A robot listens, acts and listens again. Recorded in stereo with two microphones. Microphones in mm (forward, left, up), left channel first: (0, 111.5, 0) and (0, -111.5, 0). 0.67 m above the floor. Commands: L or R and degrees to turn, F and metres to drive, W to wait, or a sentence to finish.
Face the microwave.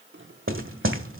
R60
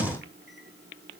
R55
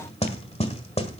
W
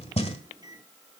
R20
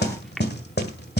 Facing the microwave, 1 to 2 m away.